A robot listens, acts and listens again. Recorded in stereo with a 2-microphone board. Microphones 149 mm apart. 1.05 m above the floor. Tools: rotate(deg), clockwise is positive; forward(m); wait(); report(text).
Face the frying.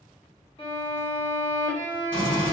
rotate(-30)
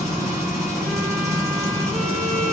rotate(25)
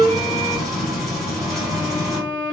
report("Found it: frying, straight ahead, 1 to 2 m away.")